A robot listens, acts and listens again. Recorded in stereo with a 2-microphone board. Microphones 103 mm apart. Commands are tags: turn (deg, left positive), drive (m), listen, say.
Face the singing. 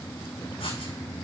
<listen/>
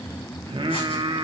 <turn deg="-60"/>
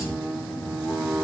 <turn deg="-10"/>
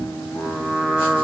<say>Facing the singing, 1 to 2 m away.</say>